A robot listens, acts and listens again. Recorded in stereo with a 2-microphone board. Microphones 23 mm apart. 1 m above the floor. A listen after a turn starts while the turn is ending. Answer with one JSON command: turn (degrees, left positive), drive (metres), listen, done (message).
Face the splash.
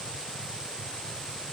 {"listen": true}
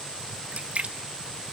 {"turn": -70}
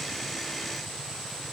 {"listen": true}
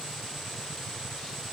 {"done": "I heard a splash, but can't make it out now. It was about straight ahead or 40° right."}